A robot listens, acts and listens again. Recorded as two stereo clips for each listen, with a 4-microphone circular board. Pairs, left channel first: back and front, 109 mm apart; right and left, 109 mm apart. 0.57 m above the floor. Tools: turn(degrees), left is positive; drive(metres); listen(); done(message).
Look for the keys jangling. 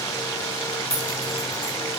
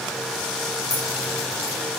turn(degrees=35)
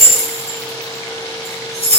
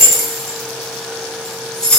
done("Found it: keys jangling, straight ahead.")